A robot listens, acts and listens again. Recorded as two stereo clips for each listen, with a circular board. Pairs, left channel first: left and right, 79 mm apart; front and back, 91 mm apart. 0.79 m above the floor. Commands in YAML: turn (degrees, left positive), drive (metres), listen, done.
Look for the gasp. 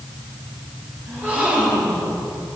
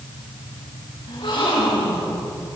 turn: -25
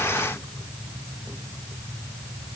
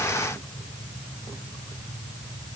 done: "Facing where the gasp came from. I can't hear it now."